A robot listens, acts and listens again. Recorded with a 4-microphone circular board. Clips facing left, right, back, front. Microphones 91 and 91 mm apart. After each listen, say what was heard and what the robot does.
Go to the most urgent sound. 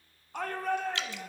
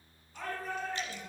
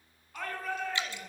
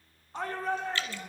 The shout: 65° left. Turn 65° left.
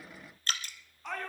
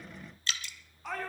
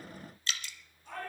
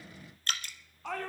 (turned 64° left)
Drive 1.0 m forward.
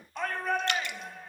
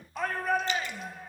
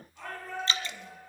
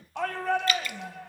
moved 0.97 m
Drive 1.0 m forward.
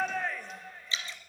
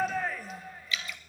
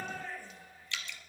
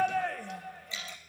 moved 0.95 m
Drive 1.0 m forward.
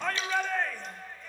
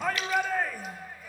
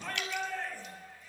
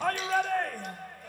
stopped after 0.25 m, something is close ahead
I am next to the shout.